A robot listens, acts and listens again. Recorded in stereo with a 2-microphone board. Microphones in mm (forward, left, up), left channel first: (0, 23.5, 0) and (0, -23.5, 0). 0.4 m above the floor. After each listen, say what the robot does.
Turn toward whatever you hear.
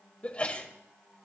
Turn 25° left.
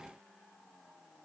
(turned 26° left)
Keep listening.
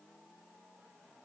I heard a sneeze, but can't make it out now. It was about straight ahead or 130° left.